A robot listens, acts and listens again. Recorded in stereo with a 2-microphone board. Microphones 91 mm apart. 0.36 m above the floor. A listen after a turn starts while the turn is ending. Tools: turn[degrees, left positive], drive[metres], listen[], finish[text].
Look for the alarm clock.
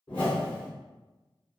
Action: listen[]
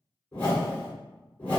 Action: listen[]
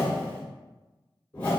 Action: finish[I can't make out an alarm clock to turn to.]